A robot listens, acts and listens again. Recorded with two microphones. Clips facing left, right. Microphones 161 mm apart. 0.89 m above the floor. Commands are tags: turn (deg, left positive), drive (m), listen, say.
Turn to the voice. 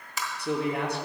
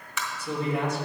<turn deg="70"/>
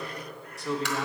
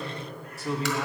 <say>Found it: a man speaking, straight ahead.</say>